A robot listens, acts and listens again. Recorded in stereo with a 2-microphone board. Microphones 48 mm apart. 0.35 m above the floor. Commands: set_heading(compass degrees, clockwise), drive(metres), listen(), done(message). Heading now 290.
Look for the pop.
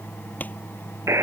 set_heading(255)
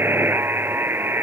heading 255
listen()
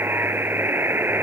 done("I heard a pop, but can't make it out now. It was about straight ahead or 110° left.")